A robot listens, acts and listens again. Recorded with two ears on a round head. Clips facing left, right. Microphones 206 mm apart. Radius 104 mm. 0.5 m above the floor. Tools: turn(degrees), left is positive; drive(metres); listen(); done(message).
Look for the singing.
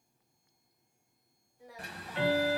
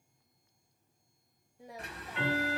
turn(degrees=-20)
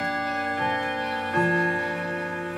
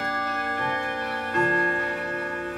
listen()
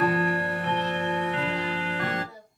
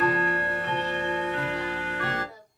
turn(degrees=70)
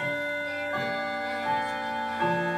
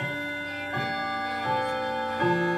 listen()
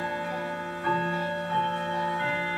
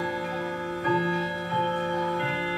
listen()
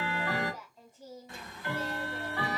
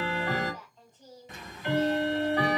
turn(degrees=10)
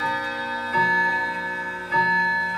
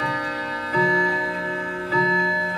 listen()
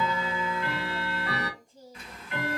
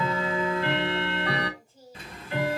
done("Found it: singing, straight ahead.")